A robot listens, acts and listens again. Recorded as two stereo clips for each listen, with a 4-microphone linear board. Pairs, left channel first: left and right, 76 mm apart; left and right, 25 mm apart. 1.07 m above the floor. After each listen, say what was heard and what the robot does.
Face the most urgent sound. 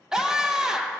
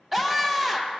Turn 30° right.
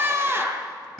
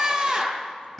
So it is at 140° right. Turn 140° right.
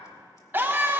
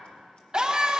The scream is now 30° right. Turn 30° right.
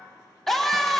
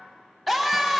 Found it: a scream, straight ahead.